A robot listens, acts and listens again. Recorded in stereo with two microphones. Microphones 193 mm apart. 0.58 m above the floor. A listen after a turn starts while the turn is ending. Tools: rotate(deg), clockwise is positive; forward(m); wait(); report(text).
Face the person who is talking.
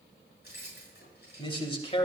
rotate(-30)
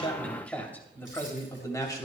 rotate(-20)
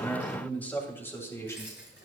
rotate(-15)
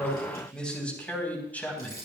rotate(-10)
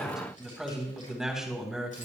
report("Found it: a man speaking, straight ahead, 2 to 4 m away.")